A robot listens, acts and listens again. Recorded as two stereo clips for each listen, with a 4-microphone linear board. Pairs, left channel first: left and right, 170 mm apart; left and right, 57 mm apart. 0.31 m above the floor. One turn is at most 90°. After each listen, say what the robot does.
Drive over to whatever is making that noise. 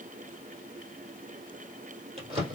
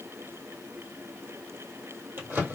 Turn 40° right.
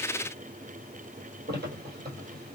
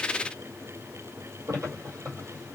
Turn 90° right.
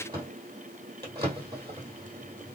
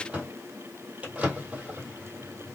Turn 25° right.
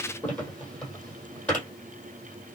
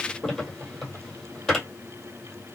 Turn 10° left.
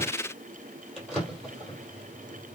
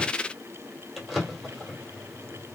Drive 1.0 m forward.
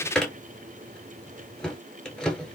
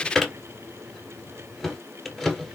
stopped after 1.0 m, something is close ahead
I am next to the drawer.